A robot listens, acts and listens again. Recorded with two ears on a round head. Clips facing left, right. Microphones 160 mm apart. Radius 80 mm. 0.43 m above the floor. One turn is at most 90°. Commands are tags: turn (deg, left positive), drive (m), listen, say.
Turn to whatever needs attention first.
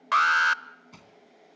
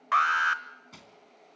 <turn deg="50"/>
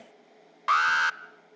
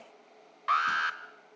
<turn deg="75"/>
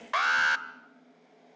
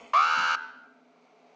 <turn deg="10"/>
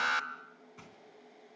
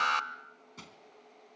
<say>Facing the alarm.</say>